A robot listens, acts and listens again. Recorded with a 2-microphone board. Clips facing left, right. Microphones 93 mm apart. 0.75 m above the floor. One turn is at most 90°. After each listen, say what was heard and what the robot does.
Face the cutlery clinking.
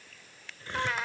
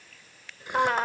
Turn 30° right.
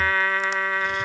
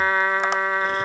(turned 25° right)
Keep listening.
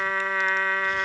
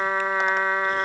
Keep listening.
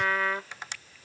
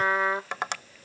I heard cutlery clinking, but can't make it out now. It was about 10° left or 140° right.